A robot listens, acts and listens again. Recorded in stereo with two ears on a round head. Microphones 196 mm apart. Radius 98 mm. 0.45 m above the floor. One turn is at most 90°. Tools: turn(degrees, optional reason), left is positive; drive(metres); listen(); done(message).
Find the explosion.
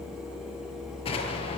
turn(degrees=25, reason="The explosion: about 25° left or 155° left.")
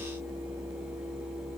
listen()
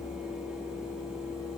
done("I heard an explosion, but can't make it out now. It was about straight ahead or 130° left.")